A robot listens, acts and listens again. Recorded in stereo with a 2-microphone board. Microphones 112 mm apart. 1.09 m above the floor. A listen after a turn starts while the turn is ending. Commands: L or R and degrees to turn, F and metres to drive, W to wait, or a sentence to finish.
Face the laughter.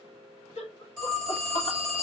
L90
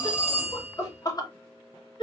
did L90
L45
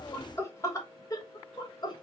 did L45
L40
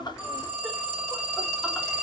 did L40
W
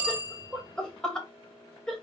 Found it: laughter, straight ahead.